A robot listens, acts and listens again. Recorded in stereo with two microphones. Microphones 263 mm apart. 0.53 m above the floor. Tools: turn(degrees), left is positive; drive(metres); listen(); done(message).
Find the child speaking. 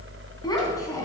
turn(degrees=30)
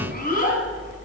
turn(degrees=150)
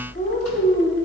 turn(degrees=30)
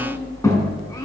turn(degrees=10)
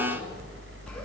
listen()
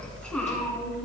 listen()
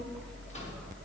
done("I heard a child speaking from this way, but can't make it out now.")